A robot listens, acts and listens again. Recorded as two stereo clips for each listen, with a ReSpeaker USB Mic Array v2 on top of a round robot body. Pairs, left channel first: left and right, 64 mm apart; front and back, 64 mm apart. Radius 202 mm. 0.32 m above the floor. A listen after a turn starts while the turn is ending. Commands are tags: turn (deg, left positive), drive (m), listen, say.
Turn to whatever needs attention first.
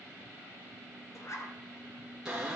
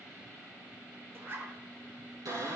<listen/>
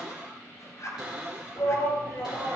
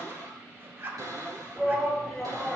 <turn deg="75"/>
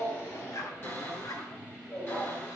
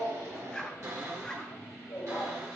<turn deg="25"/>
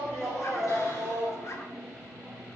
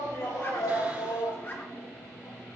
<say>Facing the shout.</say>